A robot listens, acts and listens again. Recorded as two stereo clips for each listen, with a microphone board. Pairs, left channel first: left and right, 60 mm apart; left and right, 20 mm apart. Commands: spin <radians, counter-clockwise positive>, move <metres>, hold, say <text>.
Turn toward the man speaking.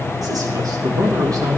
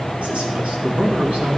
spin -1.22
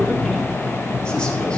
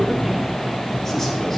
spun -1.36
spin 0.17
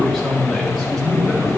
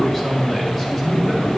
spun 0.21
say Found it: a man speaking, straight ahead, 2 to 4 m away.